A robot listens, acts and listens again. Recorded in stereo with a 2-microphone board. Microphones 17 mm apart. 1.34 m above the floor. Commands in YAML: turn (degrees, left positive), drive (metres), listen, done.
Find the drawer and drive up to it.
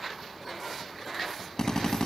listen: true
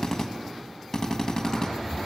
turn: -50
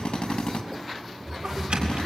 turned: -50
turn: -80
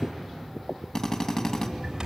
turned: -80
turn: -25
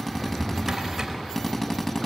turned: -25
drive: 1.0
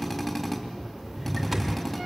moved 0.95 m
drive: 1.0
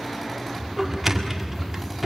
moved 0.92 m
drive: 1.0
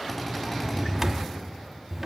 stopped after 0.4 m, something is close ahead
turn: -10
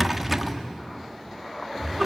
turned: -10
done: "I am next to the drawer."